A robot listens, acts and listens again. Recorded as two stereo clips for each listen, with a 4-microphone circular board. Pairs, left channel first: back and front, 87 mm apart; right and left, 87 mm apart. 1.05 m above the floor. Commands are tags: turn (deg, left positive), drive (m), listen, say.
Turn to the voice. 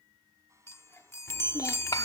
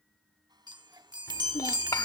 <turn deg="-140"/>
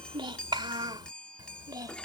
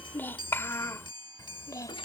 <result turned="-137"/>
<turn deg="-40"/>
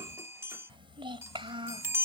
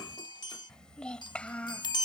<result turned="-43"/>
<turn deg="-15"/>
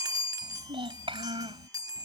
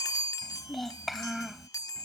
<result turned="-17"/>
<say>Facing the child speaking.</say>